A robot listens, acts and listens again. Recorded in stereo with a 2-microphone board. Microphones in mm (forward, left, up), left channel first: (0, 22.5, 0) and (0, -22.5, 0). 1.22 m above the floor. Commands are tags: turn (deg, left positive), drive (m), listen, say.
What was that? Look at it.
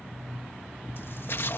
<turn deg="60"/>
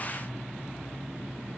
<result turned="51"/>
<listen/>
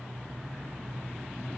<say>I heard a splash, but can't make it out now. It was about 10° left or 70° left.</say>